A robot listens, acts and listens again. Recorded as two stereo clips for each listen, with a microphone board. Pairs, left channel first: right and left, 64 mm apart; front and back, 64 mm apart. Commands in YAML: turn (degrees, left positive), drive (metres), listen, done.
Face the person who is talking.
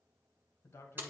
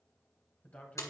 turn: -60
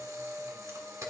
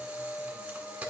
listen: true
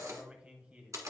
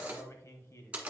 turn: 25
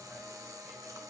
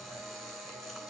listen: true
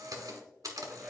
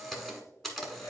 listen: true
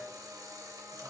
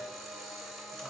done: "Facing where the man speaking came from. I can't hear it now."